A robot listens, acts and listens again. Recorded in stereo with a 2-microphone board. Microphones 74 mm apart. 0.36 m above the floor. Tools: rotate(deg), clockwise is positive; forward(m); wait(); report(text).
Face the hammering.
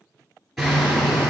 rotate(-30)
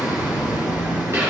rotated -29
rotate(30)
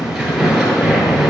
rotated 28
report("Found it: hammering, straight ahead.")